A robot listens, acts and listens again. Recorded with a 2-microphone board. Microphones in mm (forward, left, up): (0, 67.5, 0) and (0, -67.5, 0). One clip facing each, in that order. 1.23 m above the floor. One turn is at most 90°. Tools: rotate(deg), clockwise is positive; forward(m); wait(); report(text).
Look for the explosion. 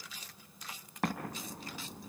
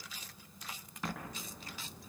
rotate(-60)
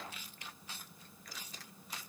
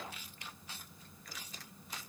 wait()
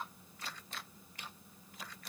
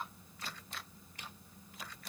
report("I heard an explosion, but can't make it out now. It was about straight ahead or 60° left.")